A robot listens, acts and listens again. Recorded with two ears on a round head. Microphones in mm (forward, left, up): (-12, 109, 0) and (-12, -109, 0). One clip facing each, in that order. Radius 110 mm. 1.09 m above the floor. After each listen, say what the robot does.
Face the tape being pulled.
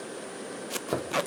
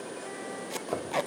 Turn 30° left.
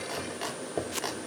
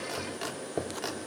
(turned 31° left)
Turn 140° left.
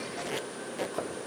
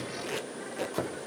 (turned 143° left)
Found it: tape being pulled, straight ahead, under 1 m away.